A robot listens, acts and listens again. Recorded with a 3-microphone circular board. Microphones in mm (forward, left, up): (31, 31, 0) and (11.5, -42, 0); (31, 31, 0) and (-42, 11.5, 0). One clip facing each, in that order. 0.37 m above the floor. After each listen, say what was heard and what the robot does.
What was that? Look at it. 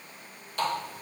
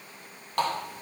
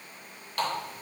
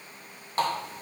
The running tap: 110° right. Turn 110° right.
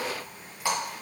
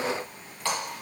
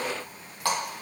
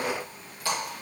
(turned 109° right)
Facing the running tap, 2 to 4 m away.